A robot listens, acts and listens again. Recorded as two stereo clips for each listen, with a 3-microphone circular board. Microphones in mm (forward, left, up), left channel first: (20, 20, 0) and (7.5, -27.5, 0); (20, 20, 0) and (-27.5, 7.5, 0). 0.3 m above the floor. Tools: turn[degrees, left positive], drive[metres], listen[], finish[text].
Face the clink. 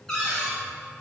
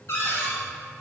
Action: listen[]
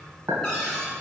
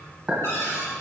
Thought: The clink: 95° right.
Action: turn[-95]
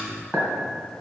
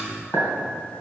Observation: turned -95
Thought: The clink is now 10° left.
Action: turn[10]
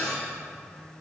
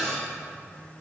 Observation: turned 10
Action: listen[]
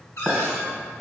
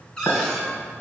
Action: finish[Found it: a clink, straight ahead, 1 to 2 m away.]